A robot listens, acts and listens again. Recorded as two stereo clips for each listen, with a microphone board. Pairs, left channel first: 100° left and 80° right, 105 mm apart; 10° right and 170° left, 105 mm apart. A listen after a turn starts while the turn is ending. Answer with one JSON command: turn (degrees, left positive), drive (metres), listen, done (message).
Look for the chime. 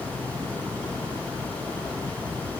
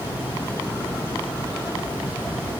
{"listen": true}
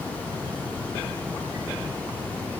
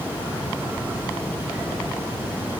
{"listen": true}
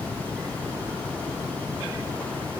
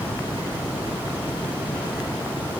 {"done": "I can't make out a chime to turn to."}